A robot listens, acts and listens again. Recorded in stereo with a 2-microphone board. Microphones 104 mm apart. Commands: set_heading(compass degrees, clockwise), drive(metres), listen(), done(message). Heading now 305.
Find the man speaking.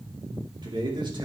set_heading(350)
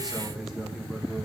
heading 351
done("Found it: a man speaking, straight ahead, 2 to 4 m away.")